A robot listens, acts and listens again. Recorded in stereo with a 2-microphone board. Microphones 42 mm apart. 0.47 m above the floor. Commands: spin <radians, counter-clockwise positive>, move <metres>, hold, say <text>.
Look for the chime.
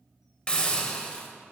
hold
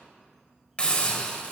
hold
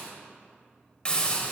say I can't make out a chime, only a hiss.